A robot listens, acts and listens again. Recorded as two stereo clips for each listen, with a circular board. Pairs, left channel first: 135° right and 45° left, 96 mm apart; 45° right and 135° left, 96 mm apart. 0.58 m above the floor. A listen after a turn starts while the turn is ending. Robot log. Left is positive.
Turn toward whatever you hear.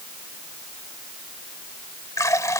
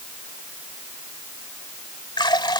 note: The running tap: 80° right.
cmd yaw -80
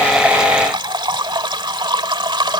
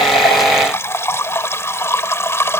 note: The running tap is now 15° left.
cmd yaw +15
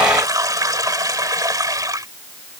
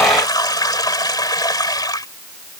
end: Found it: a running tap, straight ahead.